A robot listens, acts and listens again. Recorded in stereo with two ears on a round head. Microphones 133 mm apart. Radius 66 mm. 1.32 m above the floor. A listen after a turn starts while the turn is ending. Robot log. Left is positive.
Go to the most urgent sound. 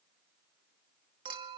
cmd idle
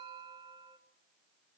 cmd idle
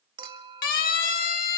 note: The siren: about 65° left or 115° left.
cmd yaw +65
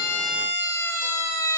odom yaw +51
note: So it is at 20° left.
cmd yaw +20
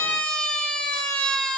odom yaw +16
cmd fwd 1.0
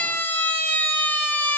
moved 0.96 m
note: The siren is now 15° left.
cmd yaw +15
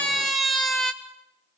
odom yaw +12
cmd fwd 1.0
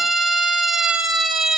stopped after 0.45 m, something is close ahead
end: Arrived at the siren, straight ahead.